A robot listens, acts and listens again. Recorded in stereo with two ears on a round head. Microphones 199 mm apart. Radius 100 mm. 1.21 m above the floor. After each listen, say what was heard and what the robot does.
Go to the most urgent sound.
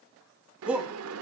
Turn 30° right.
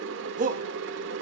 So it is at 145° right. Turn 145° right.
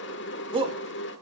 The shout is now 25° right. Turn 25° right.
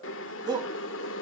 The shout is now 20° right. Turn 20° right.
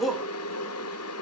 Drive 1.0 m forward.
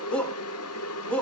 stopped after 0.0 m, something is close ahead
Something is in my way. I am facing the shout but have not reached it.